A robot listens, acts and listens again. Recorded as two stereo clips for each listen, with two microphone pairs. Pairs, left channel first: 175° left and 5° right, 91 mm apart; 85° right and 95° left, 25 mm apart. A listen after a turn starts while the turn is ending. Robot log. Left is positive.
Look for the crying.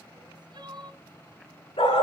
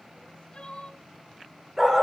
note: The crying: 40° right.
cmd yaw -40
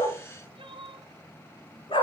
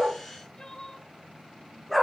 note: The crying is now 20° right.
cmd yaw -20
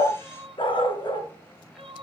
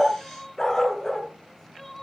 end: Found it: crying, straight ahead, 1 to 2 m away.